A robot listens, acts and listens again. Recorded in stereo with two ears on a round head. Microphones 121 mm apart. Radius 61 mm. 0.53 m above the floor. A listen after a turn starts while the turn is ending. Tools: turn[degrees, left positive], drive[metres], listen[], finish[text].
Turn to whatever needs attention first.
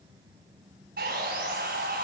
Action: listen[]
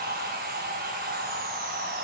Action: listen[]
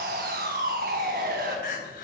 Thought: The crying: about 65° left or 115° left.
Action: turn[65]
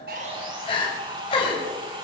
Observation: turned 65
Thought: So it is at 40° left.
Action: turn[40]
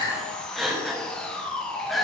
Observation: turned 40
Action: finish[Facing the crying.]